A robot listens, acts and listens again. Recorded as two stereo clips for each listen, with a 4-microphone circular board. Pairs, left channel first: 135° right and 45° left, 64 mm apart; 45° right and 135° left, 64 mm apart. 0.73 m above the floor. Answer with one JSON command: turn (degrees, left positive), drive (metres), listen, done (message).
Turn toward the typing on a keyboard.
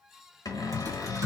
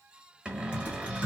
{"turn": 60}
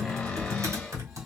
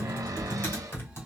{"done": "Facing the typing on a keyboard."}